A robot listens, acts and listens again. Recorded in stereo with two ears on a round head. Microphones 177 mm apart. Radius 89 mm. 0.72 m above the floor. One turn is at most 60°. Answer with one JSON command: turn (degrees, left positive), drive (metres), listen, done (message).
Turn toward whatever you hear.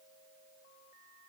{"listen": true}
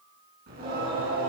{"turn": -50}
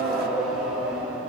{"done": "Facing the singing, over 4 m away."}